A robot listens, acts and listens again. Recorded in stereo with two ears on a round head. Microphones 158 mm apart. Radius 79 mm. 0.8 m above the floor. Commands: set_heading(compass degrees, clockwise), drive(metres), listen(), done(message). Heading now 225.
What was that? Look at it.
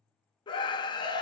set_heading(200)
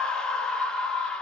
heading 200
done("Found it: a scream, straight ahead, under 1 m away.")